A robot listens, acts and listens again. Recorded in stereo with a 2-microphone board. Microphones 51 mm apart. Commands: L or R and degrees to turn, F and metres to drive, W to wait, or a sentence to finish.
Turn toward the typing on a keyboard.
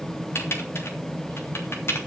L55
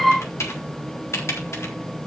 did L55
L70
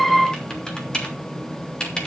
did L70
L15
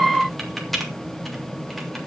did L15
Found it: typing on a keyboard, straight ahead, 2 to 4 m away.